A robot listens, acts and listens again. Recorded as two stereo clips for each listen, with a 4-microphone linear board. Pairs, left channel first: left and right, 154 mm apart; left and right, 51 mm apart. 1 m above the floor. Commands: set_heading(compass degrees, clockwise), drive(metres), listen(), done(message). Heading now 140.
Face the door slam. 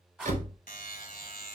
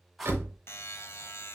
set_heading(195)
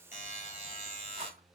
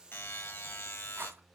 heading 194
listen()
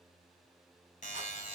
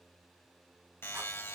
done("I heard a door slam, but can't make it out now. It was about straight ahead or 70° right.")